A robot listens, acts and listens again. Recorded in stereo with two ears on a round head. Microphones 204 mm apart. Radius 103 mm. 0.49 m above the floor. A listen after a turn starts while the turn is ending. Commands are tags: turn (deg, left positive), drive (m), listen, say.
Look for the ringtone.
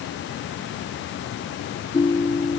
<turn deg="20"/>
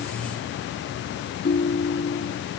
<turn deg="140"/>
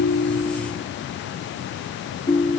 <turn deg="20"/>
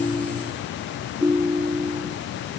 <say>Found it: a ringtone, straight ahead.</say>